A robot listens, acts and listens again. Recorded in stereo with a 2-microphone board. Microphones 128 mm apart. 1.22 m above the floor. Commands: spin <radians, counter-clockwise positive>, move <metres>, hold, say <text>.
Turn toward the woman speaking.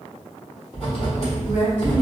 spin 1.31
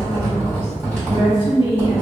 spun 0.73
spin 0.79
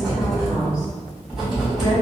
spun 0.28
spin 0.52
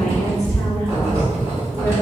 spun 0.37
hold
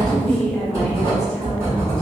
say Found it: a woman speaking, straight ahead, 1 to 2 m away.